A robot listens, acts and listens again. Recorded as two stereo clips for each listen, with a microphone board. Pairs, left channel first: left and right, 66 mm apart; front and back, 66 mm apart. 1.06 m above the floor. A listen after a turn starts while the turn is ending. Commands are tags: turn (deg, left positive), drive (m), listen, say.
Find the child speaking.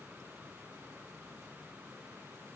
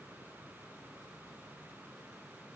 <listen/>
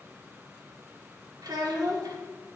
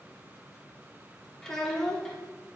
<turn deg="-80"/>
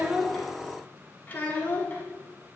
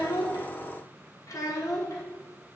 <turn deg="30"/>
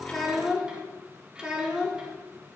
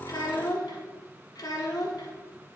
<turn deg="-10"/>
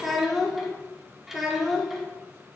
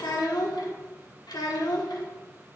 <say>Facing the child speaking.</say>